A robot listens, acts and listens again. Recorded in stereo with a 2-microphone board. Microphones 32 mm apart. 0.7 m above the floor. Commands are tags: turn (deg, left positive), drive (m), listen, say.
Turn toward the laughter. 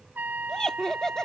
<turn deg="20"/>
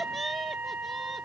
<say>Facing the laughter.</say>